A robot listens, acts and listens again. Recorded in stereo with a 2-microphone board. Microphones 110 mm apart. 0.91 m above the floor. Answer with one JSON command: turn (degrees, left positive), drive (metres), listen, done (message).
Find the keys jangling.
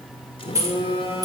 {"turn": -30}
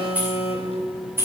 {"turn": -20}
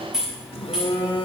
{"done": "Found it: keys jangling, straight ahead, 2 to 4 m away."}